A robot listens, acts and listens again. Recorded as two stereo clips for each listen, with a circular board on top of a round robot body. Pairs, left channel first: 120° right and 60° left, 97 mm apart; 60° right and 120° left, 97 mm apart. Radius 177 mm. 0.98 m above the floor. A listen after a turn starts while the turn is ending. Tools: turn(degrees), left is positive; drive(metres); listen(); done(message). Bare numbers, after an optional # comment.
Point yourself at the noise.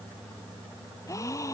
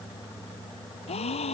# The gasp: 60° right.
turn(-60)
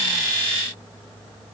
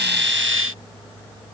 done("Facing where the gasp came from. I can't hear it now.")